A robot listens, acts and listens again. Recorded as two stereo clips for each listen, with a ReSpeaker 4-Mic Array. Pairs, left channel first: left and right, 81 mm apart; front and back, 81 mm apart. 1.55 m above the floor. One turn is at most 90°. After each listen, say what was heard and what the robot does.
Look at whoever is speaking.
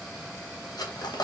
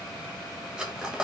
Keep listening.
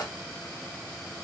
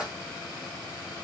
Keep listening.
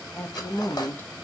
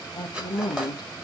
The woman speaking: 25° left. Turn 25° left.
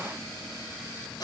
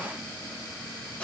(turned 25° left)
Keep listening.
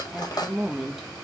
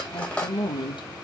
Found it: a woman speaking, straight ahead.